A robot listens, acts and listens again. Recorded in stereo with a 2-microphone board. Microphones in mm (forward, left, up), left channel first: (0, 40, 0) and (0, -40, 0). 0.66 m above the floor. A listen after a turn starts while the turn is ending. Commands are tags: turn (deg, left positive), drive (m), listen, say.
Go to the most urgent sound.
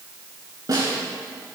<listen/>
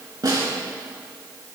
<listen/>
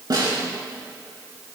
<say>I can't make out anything urgent, only a snare drum.</say>